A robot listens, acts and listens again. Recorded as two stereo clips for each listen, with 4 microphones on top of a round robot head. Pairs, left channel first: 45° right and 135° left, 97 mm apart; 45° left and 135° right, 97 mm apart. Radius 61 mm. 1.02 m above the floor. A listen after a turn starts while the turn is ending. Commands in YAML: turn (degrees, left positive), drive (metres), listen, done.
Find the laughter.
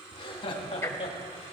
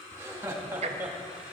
turn: -65
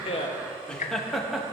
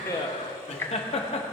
turn: 50
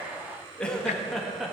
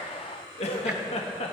turn: 50
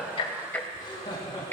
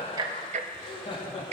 turn: 10
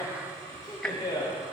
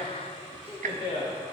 turn: 10
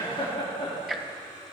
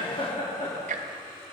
done: "Facing the laughter."